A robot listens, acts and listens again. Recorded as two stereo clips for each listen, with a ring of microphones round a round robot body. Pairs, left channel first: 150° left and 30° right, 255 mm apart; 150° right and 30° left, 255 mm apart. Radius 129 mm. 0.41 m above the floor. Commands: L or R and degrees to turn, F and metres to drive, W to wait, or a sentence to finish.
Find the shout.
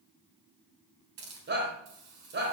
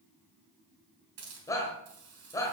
R75
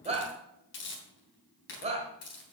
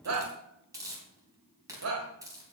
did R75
L35
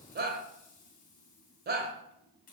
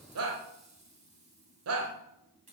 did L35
L20
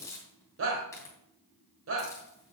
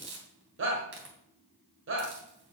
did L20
Found it: a shout, straight ahead.